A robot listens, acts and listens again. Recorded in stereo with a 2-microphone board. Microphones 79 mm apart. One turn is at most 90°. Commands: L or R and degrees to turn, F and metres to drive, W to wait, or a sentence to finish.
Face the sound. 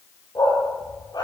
L65
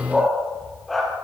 Found it: a dog barking, straight ahead.